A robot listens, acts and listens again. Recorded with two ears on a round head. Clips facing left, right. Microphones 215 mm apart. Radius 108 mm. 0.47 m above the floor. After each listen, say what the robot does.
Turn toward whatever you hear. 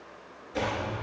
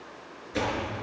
Turn 35° right.
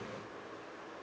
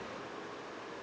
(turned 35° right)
Keep listening.
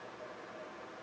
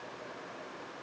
I heard a door slam, but can't make it out now. It was about straight ahead or 110° right.